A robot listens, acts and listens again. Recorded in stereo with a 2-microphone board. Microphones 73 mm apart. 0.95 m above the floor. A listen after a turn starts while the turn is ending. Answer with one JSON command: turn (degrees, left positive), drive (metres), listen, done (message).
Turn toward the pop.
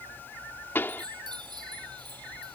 {"turn": 30}
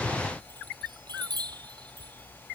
{"listen": true}
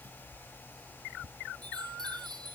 {"done": "I heard a pop, but can't make it out now. It was about straight ahead or 120° left."}